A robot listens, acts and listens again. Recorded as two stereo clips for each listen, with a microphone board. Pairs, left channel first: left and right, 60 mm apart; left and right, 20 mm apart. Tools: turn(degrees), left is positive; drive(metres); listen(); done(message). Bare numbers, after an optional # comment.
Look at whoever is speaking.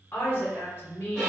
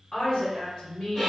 # The woman speaking: about 35° left or 145° left.
turn(35)
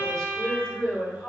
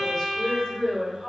# So it is at 15° left.
turn(15)
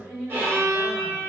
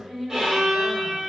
done("Facing the woman speaking.")